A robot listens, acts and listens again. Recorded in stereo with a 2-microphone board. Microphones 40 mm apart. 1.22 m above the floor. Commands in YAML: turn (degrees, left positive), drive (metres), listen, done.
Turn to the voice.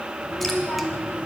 turn: 45
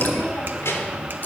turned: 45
turn: 85
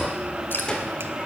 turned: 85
turn: 15
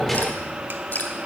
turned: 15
listen: true
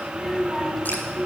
done: "Facing the child speaking, 2 to 4 m away."